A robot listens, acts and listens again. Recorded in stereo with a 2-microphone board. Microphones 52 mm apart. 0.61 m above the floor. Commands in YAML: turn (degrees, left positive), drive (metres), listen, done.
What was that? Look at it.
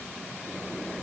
listen: true
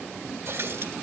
turn: -50
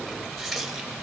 done: "Facing the running tap, 1 to 2 m away."